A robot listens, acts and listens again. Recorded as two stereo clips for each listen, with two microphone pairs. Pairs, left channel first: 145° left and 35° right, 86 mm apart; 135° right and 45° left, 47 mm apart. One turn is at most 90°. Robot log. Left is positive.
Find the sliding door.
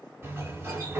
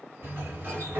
note: The sliding door: 20° left.
cmd yaw +20
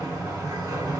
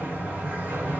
end: Facing the sliding door, 2 to 4 m away.